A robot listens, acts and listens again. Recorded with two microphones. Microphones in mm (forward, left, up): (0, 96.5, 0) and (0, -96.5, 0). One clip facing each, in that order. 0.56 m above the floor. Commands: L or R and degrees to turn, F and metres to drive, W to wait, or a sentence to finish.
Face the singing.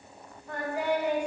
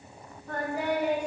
R40
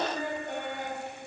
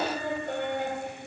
R100
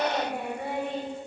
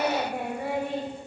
Facing the singing, 1 to 2 m away.